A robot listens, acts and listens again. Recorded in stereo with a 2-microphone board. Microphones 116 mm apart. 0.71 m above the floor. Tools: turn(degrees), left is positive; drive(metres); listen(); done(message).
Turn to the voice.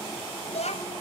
turn(degrees=90)
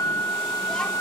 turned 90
listen()
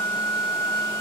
listen()
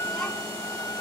done("I heard a child speaking from this way, but can't make it out now.")